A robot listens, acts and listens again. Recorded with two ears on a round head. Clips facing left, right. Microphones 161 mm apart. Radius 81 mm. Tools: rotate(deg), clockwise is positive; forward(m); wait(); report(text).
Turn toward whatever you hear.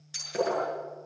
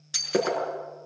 rotate(70)
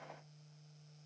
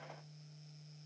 wait()
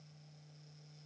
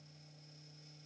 report("I heard breaking glass, but can't make it out now. It was about straight ahead or 40° right.")